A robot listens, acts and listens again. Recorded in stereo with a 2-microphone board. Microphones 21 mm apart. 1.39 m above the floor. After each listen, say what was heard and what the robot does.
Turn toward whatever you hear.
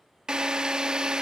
The drill: about 45° right or 135° right. Turn 45° right.
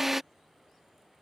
So it is at 15° right. Turn 15° right.
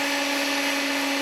Found it: a drill, straight ahead.